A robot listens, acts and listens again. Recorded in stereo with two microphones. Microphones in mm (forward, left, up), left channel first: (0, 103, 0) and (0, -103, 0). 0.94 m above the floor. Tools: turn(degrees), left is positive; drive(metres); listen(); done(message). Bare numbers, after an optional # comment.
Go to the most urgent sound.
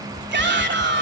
# The shout: about 60° right or 120° right.
turn(-60)
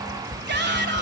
# So it is at 60° right.
turn(-60)
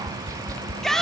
drive(1.0)
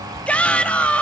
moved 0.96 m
drive(1.0)
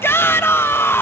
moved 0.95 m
# The shout is now 15° left.
turn(15)
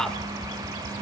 drive(1.0)
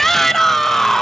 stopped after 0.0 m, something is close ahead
done("Arrived at the shout, straight ahead.")